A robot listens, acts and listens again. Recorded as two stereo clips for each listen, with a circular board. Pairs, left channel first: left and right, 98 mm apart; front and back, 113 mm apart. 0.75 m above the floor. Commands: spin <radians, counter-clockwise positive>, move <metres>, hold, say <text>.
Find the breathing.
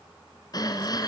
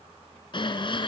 spin 0.70
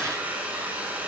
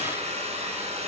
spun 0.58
spin 0.17
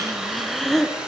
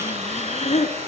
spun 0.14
say Found it: breathing, straight ahead, 2 to 4 m away.